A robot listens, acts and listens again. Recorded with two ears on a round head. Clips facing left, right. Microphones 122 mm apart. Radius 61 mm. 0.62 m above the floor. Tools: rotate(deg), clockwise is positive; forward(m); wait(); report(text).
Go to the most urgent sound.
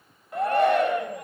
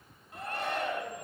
rotate(-55)
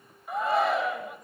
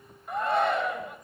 forward(1.0)
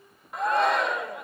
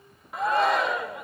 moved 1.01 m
forward(1.0)
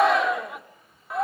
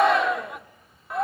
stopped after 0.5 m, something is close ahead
report("I am next to the shout.")